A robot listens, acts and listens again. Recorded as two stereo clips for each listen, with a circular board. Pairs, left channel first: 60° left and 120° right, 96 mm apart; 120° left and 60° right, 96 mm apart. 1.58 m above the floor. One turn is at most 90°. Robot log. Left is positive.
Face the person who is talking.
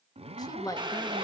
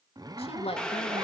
note: The woman speaking: 110° left.
cmd yaw +90
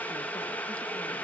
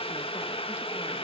note: Nothing new. It was at 20° left.
cmd yaw +20
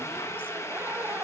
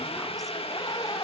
cmd idle
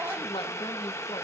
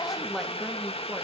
note: The woman speaking is now 30° left.
cmd yaw +30
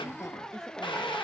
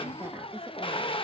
cmd idle
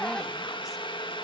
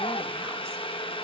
cmd idle
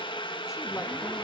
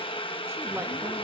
end: Facing where the woman speaking came from. I can't hear it now.